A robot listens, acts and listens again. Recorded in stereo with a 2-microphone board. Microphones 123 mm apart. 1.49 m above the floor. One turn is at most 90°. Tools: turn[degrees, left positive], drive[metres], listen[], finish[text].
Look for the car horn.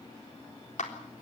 Action: listen[]
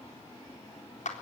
Action: listen[]
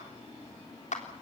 Action: finish[I can't make out a car horn, only a clap.]